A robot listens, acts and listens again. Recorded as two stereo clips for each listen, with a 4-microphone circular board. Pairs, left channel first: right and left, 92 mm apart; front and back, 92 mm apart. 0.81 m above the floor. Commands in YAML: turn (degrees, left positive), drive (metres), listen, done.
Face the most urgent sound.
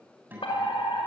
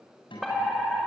turn: -90
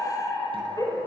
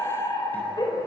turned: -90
turn: -40
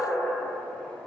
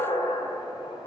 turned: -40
done: "Facing the fire alarm, over 4 m away."